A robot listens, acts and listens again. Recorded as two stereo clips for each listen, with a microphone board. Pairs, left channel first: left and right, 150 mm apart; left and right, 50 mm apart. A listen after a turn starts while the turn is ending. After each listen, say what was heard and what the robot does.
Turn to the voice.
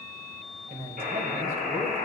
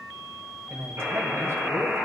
The man speaking: about 70° right or 110° right. Turn 70° right.
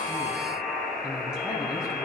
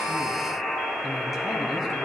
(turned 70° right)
Keep listening.
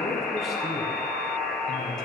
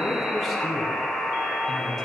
Keep listening.
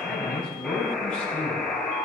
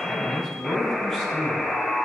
Found it: a man speaking, straight ahead, over 4 m away.